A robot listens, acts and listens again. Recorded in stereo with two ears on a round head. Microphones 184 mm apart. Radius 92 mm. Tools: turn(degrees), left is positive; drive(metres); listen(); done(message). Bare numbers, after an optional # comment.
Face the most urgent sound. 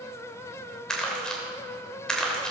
listen()
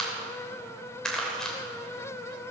listen()
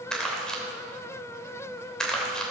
done("I can't make out anything urgent to turn to.")